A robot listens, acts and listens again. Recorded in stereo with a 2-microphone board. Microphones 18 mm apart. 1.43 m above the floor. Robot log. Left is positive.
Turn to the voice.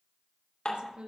cmd yaw -90
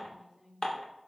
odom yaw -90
end: Found it: a woman speaking, straight ahead, 2 to 4 m away.